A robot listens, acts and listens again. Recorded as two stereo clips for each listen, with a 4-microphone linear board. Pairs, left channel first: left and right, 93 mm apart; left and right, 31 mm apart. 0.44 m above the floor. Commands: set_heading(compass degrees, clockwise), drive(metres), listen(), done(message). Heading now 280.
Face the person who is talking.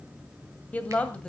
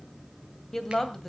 set_heading(250)
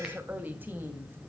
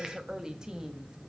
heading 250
set_heading(275)
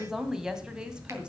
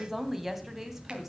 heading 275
set_heading(285)
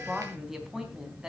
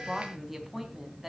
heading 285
done("Found it: a woman speaking, straight ahead, 2 to 4 m away.")